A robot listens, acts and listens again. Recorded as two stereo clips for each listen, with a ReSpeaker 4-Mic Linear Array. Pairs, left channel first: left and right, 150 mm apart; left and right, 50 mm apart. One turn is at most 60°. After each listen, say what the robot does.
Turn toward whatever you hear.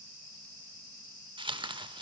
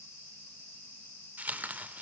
Turn 30° right.
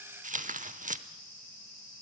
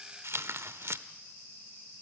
Turn 60° right.
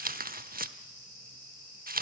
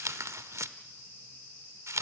Turn 60° right.
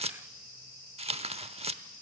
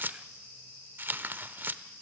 Turn 45° right.
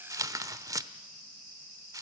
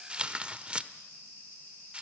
Turn 25° right.
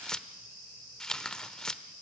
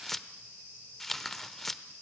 Found it: tearing paper, straight ahead.